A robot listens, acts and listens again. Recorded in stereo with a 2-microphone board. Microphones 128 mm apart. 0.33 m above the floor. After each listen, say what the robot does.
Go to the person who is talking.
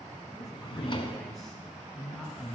Turn 30° left.
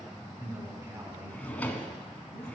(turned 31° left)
Turn 30° right.
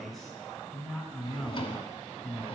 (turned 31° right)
Drive 1.0 m forward.
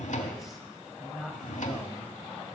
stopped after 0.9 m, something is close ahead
Arrived at the man speaking, straight ahead.